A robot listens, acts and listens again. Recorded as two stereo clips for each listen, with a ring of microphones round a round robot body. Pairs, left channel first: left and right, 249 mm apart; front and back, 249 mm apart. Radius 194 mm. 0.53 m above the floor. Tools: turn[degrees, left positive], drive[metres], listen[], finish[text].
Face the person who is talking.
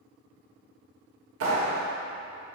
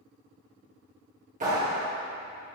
Action: listen[]
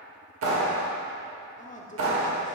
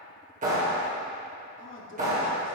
Thought: The man speaking: 35° left.
Action: turn[35]
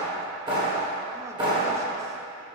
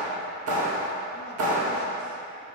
Action: listen[]
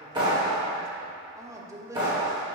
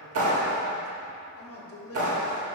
Thought: The man speaking is now 15° right.
Action: turn[-15]
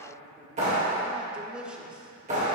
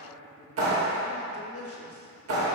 Action: finish[Found it: a man speaking, straight ahead.]